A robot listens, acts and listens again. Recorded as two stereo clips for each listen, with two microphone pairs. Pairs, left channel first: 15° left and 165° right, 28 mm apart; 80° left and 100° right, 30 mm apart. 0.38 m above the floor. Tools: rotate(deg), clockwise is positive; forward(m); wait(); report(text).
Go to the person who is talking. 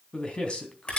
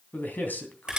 rotate(-65)
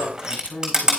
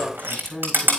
forward(1.0)
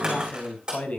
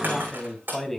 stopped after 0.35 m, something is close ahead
report("Something is in my way. I am facing the man speaking but have not reached it.")